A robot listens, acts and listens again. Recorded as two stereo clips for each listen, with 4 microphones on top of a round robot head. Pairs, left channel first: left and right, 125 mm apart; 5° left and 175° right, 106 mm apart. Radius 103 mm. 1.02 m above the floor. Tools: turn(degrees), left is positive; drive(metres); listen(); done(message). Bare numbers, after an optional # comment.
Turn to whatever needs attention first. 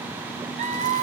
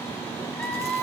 # The scream: 75° right.
turn(-75)
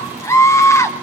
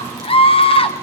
# The scream is now 25° left.
turn(25)
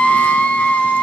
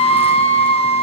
# The scream is now 10° left.
turn(10)
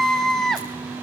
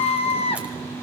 done("Found it: a scream, straight ahead.")